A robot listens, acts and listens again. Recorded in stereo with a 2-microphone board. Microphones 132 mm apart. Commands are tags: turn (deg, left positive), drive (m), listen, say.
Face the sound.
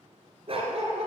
<turn deg="-55"/>
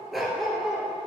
<say>Facing the dog barking.</say>